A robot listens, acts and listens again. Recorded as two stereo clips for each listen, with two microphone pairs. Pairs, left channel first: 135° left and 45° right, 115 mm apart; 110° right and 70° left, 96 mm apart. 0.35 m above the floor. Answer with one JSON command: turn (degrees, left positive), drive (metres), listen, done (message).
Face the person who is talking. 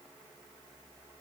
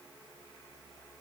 {"listen": true}
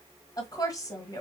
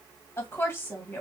{"turn": -175}
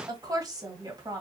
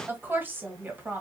{"done": "Facing the woman speaking, 1 to 2 m away."}